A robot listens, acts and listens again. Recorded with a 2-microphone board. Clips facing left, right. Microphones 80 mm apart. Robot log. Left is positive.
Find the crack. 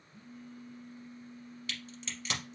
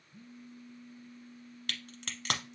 note: The crack: about 70° right or 110° right.
cmd yaw -70
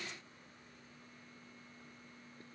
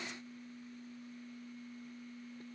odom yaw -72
cmd idle
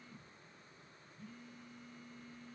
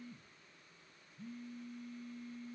end: I heard a crack, but can't make it out now. It was about straight ahead or 35° right.